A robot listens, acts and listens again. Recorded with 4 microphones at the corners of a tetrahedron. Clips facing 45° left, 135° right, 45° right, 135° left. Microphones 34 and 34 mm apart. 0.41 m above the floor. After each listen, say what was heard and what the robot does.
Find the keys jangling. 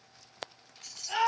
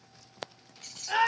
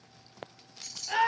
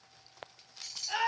The keys jangling: 150° right. Turn 150° right.
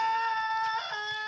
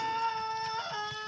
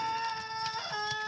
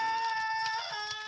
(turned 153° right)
Keep listening.
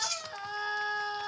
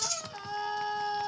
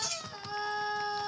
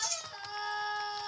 The keys jangling is now 20° right. Turn 20° right.
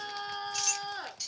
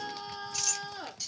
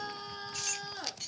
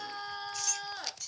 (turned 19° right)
The keys jangling is now 40° right. Turn 40° right.
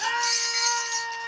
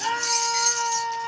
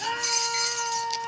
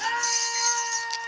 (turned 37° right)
The keys jangling is now 10° right. Turn 10° right.
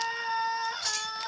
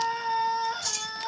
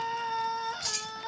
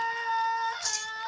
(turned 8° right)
Facing the keys jangling, 1 to 2 m away.